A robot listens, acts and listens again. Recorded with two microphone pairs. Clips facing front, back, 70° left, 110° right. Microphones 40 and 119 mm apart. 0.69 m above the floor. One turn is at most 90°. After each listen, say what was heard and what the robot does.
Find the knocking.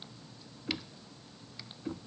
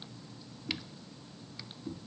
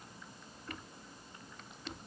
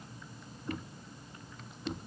The knocking: 40° right. Turn 40° right.
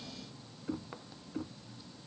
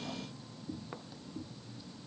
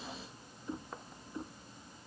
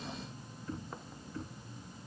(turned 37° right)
Found it: knocking, straight ahead.